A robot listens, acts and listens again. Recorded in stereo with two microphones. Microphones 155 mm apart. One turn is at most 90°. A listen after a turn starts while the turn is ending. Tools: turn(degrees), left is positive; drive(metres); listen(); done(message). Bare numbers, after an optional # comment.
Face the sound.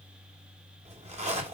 # The zipper: about 45° right or 135° right.
turn(-45)
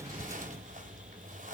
# So it is at 75° right.
turn(-75)
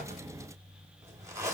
# The zipper is now 20° right.
turn(-20)
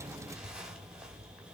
done("Facing the zipper.")